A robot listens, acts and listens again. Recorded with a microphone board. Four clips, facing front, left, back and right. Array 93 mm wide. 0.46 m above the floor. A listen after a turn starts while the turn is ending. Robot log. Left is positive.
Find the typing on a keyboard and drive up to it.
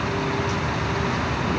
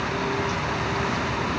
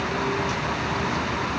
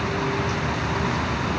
cmd idle
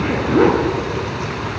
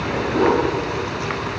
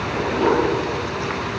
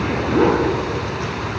cmd idle
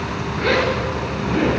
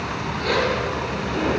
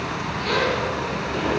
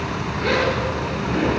end: I can't make out typing on a keyboard to turn to.